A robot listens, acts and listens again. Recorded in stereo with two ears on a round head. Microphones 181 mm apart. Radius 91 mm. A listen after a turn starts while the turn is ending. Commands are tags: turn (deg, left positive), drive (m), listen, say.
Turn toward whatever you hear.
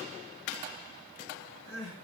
<turn deg="90"/>
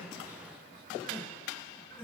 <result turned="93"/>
<say>Found it: crying, straight ahead, over 4 m away.</say>